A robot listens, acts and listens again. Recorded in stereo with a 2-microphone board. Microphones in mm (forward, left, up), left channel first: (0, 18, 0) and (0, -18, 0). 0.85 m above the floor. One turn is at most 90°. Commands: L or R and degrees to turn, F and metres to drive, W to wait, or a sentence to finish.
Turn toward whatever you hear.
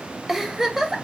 R30
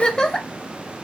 L20
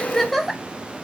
Found it: a giggle, straight ahead, under 1 m away.